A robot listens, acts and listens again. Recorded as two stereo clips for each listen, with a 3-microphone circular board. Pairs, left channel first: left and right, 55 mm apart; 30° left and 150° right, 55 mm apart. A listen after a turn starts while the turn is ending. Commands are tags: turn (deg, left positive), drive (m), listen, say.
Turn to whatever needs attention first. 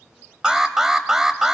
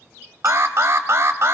<turn deg="-170"/>
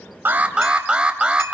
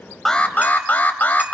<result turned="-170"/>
<turn deg="-20"/>
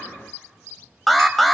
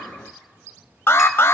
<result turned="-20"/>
<say>Found it: an alarm, straight ahead, under 1 m away.</say>